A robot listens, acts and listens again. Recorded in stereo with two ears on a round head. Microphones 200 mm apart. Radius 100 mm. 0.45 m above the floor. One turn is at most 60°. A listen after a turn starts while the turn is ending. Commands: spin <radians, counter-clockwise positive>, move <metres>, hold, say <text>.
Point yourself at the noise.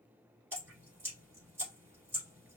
spin -0.52
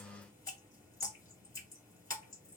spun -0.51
spin 0.26
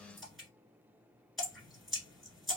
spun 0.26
say Facing the dripping.